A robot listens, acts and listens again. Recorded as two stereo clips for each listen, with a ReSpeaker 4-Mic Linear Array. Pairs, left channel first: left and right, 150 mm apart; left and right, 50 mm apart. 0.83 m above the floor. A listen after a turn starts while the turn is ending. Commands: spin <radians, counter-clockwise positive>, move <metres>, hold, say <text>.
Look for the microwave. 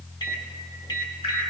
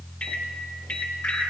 spin 0.52
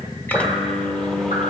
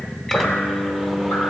say Facing the microwave.